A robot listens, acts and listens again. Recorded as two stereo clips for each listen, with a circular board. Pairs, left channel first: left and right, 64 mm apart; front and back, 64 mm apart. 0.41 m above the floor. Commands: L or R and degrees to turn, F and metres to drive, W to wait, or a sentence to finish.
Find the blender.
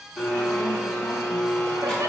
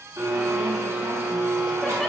L170
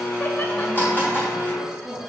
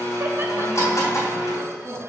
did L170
L35
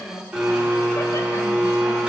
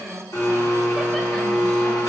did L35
R20
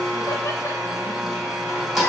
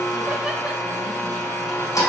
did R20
Facing the blender, 2 to 4 m away.